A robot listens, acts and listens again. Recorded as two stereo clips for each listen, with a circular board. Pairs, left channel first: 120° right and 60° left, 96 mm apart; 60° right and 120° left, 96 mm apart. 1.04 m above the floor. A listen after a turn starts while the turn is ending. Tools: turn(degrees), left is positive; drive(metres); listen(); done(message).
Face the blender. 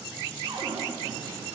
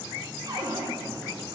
listen()
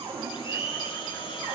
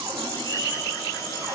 turn(degrees=-110)
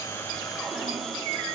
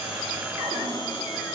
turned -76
turn(degrees=-35)
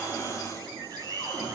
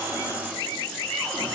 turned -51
turn(degrees=15)
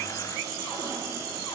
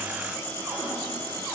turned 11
done("I heard a blender from this way, but can't make it out now.")